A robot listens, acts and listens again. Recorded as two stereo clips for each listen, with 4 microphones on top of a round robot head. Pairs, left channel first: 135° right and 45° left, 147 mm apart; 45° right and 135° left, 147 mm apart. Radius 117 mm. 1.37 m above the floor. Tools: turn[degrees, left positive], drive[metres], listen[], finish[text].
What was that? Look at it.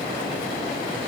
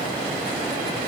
Action: listen[]
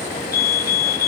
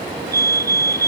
Thought: The fire alarm: 155° right.
Action: turn[-155]
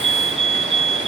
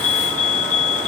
Action: finish[Found it: a fire alarm, straight ahead.]